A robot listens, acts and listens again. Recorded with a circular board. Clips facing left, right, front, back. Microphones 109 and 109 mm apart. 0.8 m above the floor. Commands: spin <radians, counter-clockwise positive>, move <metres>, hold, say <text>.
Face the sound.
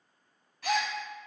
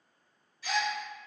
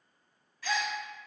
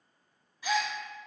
spin 1.92
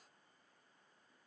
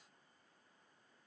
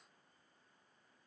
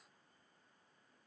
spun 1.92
say I heard a gasp from this way, but can't make it out now.